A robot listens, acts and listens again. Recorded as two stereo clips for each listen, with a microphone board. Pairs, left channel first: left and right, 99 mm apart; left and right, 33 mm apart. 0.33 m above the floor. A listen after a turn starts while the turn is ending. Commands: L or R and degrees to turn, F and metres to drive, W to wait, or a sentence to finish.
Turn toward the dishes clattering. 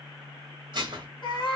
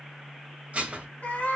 R50
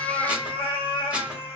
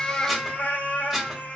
W
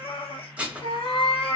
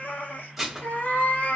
R15
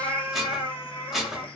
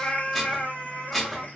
Found it: dishes clattering, straight ahead, under 1 m away.